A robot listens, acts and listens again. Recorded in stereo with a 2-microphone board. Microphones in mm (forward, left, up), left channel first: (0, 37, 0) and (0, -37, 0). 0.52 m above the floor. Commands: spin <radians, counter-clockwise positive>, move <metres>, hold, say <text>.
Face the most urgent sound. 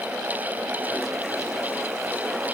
hold
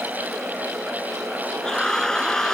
spin 0.52
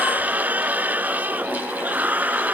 spin -0.44
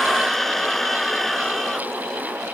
say Facing the scream.